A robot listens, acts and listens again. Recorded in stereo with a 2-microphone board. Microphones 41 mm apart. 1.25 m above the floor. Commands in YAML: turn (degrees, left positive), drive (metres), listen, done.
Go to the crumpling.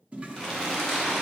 turn: 30
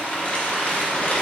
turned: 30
turn: 145
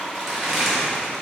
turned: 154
drive: 1.0
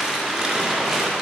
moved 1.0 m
turn: -15
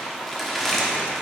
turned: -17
drive: 1.0
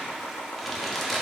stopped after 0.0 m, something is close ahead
done: "I am next to the crumpling."